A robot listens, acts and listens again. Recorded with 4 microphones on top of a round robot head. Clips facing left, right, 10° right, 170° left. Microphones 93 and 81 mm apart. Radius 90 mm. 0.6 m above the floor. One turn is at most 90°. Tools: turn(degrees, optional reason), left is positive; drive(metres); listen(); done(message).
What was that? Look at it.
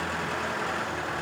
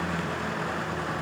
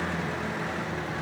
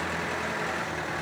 listen()
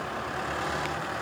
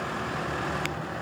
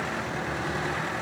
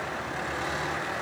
listen()
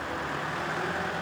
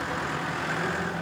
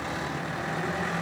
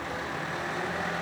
done("I can't make out anything.")